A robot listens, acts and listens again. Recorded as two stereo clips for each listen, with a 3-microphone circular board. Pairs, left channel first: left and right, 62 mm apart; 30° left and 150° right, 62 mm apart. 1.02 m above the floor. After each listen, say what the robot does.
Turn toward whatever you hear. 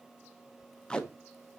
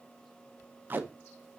Turn 165° left.
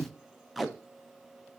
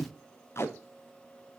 Facing the tape being pulled, under 1 m away.